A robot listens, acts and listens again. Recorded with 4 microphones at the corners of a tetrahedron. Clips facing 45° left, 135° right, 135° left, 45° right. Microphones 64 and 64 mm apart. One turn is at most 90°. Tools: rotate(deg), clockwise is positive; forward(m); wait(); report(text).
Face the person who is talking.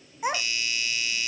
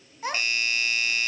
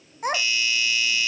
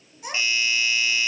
rotate(-90)
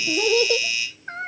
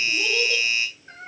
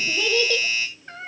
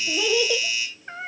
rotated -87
rotate(-30)
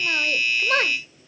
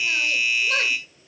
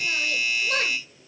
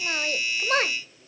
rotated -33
report("Found it: a child speaking, straight ahead, 1 to 2 m away.")